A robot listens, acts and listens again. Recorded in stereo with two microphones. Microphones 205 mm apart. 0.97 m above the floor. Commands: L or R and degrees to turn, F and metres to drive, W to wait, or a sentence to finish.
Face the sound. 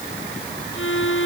L90
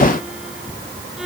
Facing the violin.